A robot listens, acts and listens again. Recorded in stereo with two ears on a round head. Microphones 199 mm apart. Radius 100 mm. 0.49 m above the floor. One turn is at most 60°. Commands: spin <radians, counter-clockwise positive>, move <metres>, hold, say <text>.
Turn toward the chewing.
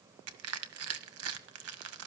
hold
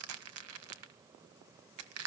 hold
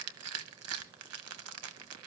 say I can't make out chewing to turn to.